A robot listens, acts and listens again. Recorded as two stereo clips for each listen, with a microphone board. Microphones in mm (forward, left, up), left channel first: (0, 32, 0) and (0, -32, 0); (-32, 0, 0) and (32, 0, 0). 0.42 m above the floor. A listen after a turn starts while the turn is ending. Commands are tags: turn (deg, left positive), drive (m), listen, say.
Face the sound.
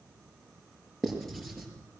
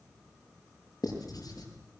<turn deg="175"/>
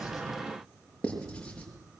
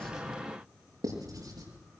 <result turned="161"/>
<turn deg="15"/>
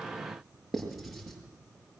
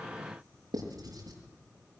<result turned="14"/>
<say>Facing the writing, over 4 m away.</say>